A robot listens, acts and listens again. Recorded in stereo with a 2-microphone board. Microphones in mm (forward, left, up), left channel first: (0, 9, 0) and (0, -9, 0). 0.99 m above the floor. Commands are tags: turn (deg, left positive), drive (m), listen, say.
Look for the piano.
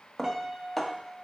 <turn deg="-15"/>
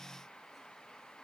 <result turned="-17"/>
<listen/>
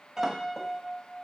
<turn deg="-150"/>
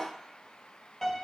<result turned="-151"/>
<say>Facing the piano, 1 to 2 m away.</say>